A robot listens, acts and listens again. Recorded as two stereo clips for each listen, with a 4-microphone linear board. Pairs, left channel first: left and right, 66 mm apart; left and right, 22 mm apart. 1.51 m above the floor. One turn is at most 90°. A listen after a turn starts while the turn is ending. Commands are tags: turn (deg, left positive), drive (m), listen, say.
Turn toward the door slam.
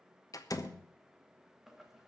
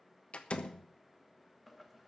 <turn deg="65"/>
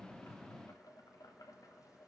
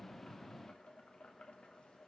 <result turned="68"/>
<listen/>
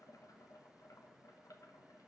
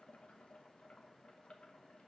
<say>I heard a door slam, but can't make it out now. It was about 5° right or 50° left.</say>